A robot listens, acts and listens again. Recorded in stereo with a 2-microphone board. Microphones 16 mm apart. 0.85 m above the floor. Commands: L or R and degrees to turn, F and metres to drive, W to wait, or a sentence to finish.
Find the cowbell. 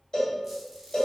L50
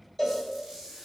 L10
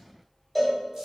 Found it: a cowbell, straight ahead.